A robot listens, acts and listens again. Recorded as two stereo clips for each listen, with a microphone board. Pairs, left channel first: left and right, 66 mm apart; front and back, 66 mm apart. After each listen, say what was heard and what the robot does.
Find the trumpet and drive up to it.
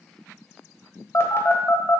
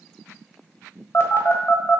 Keep listening.
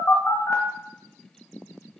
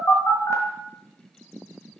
Keep listening.
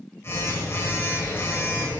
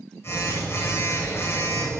I can't make out a trumpet to turn to.